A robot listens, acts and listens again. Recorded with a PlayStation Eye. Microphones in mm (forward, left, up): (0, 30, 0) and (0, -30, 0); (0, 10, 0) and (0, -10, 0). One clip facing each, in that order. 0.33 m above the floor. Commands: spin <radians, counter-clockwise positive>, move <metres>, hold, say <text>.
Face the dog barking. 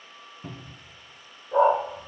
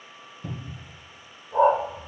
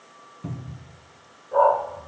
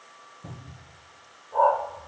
spin 1.57
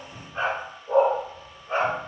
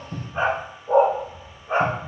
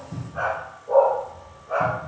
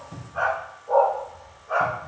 spin -0.35
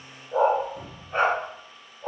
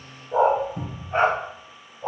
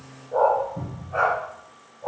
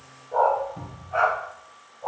spin -0.26
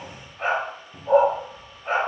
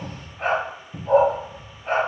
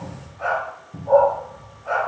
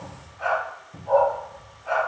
say Facing the dog barking, 2 to 4 m away.